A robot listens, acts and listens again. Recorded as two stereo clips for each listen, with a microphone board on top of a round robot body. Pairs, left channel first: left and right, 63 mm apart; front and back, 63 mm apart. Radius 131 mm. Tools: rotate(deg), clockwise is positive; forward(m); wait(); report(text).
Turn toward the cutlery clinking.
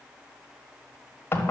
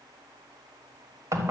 wait()
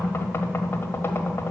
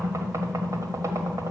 wait()
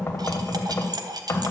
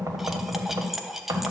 rotate(95)
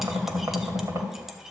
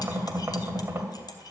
wait()
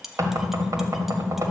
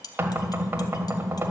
report("Facing the cutlery clinking, 1 to 2 m away.")